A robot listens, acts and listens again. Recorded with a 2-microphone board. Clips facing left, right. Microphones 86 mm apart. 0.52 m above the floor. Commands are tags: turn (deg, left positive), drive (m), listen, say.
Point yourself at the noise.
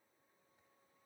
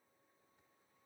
<listen/>
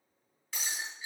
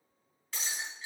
<turn deg="30"/>
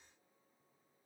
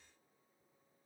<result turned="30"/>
<listen/>
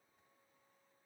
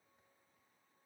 <say>I heard breaking glass, but can't make it out now. It was about 30° right or 150° left.</say>